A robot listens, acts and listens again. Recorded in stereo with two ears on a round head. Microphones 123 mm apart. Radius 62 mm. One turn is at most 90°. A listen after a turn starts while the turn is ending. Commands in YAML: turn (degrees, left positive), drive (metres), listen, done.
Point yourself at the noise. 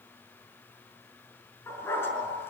turn: 15
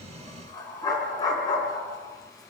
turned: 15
turn: 30
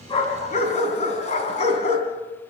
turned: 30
turn: 90
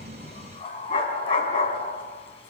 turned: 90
turn: 40
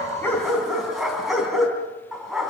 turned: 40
done: "Found it: a dog barking, straight ahead, 2 to 4 m away."